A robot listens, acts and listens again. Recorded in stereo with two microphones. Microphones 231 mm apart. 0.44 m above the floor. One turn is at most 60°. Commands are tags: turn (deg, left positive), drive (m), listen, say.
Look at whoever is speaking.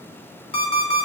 <listen/>
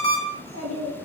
<turn deg="-60"/>
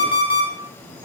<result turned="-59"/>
<turn deg="-25"/>
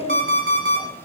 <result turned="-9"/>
<turn deg="-20"/>
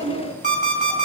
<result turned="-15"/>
<turn deg="-20"/>
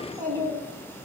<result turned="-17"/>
<turn deg="-20"/>
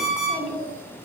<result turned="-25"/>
<say>Found it: a child speaking, straight ahead, 2 to 4 m away.</say>